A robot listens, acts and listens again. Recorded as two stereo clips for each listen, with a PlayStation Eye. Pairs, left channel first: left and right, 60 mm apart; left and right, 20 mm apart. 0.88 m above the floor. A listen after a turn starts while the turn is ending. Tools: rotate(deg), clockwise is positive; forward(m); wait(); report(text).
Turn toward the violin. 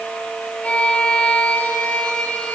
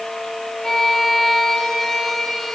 rotate(-20)
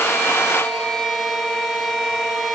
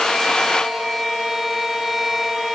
report("Found it: a violin, straight ahead, over 4 m away.")